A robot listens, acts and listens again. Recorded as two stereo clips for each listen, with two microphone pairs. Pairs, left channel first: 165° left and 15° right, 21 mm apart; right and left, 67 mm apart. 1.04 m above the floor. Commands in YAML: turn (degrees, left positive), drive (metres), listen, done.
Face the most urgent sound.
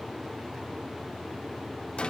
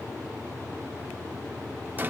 listen: true
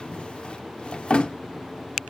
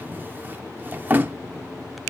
listen: true
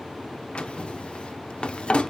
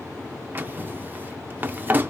done: "I can't make out anything urgent, only a drawer."